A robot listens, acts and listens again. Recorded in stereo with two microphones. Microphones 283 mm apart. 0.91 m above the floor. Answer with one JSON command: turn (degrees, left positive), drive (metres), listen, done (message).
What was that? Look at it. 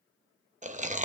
{"turn": -25}
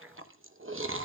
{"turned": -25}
{"turn": -125}
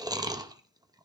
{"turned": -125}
{"turn": -15}
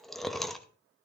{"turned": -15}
{"done": "Found it: chewing, straight ahead."}